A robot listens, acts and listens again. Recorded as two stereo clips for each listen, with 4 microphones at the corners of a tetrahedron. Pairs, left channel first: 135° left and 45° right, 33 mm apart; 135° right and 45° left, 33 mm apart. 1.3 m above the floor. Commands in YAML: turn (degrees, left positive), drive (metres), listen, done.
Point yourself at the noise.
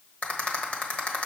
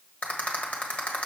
turn: 175
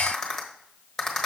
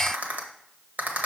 turn: 55
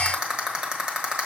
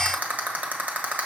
done: "Found it: a rattle, straight ahead, 1 to 2 m away."